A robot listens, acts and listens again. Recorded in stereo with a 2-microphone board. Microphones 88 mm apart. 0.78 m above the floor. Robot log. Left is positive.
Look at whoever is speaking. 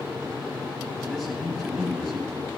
cmd yaw +30
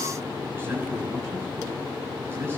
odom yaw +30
note: So it is at 25° right.
cmd yaw -25
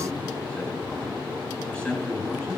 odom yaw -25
note: The man speaking is now 15° left.
cmd yaw +15
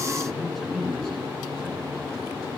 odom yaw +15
end: Facing the man speaking, over 4 m away.